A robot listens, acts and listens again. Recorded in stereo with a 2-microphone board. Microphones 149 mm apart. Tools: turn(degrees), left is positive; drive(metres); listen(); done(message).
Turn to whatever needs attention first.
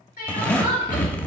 turn(degrees=90)
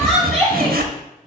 done("Facing the crying.")